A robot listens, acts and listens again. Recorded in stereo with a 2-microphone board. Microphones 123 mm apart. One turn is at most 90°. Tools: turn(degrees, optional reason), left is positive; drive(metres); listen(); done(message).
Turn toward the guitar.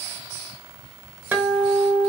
turn(degrees=-15, reason="The guitar: about 15° right or 165° right.")
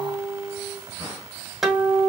done("Found it: a guitar, straight ahead, 1 to 2 m away.")